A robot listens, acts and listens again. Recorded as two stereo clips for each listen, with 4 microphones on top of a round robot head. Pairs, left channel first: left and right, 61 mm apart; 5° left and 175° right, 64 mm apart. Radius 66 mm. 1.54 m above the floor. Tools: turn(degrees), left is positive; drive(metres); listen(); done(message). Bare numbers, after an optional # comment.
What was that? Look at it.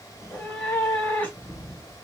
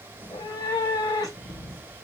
# The cat meowing: 30° left.
turn(30)
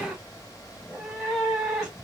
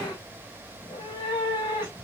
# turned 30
done("Facing the cat meowing, 1 to 2 m away.")